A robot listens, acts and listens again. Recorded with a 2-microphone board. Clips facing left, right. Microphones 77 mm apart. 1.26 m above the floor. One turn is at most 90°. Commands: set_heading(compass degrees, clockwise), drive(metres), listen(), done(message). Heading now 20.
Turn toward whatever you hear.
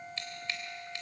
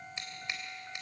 set_heading(40)
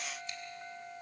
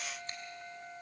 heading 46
listen()
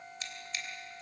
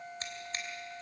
set_heading(136)
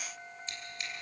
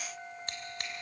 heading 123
set_heading(183)
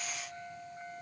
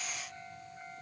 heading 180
listen()
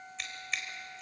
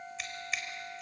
done("Facing the scissors, 2 to 4 m away.")